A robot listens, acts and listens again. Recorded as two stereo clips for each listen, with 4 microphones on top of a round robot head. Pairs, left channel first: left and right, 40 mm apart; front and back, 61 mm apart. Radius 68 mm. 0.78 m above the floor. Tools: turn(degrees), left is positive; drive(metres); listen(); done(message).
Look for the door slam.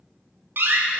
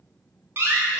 turn(degrees=-125)
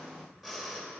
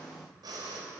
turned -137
turn(degrees=15)
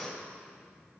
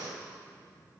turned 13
done("Facing where the door slam came from. I can't hear it now.")